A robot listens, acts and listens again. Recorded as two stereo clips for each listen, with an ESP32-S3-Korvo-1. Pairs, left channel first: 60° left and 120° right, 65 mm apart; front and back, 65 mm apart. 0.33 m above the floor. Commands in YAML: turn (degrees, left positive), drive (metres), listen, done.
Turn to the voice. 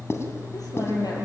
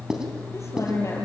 turn: 45
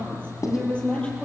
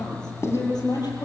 turn: -15
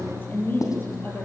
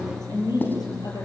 done: "Facing the woman speaking, over 4 m away."